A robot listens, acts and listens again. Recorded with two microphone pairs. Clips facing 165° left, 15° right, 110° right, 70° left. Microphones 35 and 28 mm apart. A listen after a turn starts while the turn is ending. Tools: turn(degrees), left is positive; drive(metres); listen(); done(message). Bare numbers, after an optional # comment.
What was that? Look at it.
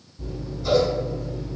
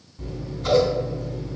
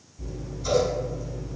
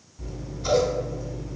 done("Facing the scissors.")